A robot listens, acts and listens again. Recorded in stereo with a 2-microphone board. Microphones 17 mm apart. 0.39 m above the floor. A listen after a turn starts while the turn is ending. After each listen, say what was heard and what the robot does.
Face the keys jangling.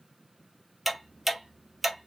Keep listening.
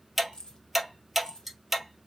The keys jangling: about 50° left or 130° left. Turn 50° left.
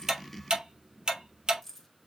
So it is at 10° left. Turn 10° left.
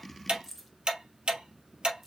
Found it: keys jangling, straight ahead, 1 to 2 m away.